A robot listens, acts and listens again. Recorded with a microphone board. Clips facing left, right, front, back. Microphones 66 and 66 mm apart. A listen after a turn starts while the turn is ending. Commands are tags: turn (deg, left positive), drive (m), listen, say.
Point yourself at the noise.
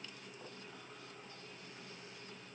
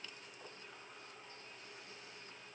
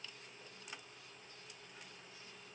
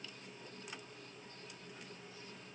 <listen/>
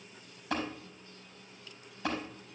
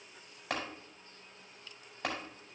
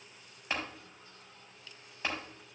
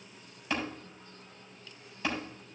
<turn deg="-65"/>
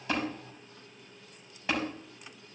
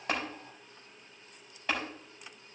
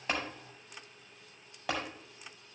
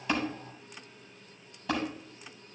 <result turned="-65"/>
<turn deg="10"/>
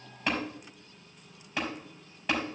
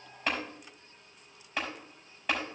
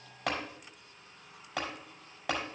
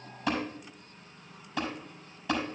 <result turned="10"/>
<say>Facing the tapping.</say>